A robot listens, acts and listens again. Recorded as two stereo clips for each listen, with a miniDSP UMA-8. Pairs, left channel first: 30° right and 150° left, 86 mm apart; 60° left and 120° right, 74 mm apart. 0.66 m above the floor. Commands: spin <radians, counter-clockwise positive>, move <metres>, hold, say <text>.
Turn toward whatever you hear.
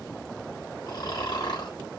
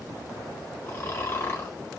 say Found it: snoring, straight ahead, 1 to 2 m away.